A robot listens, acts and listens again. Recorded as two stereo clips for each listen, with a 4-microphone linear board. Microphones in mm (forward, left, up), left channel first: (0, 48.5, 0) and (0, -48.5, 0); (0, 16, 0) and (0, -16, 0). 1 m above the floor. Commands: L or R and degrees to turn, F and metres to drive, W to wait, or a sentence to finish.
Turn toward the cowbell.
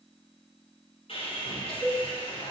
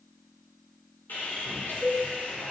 L45
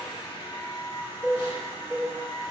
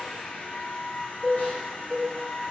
Facing the cowbell.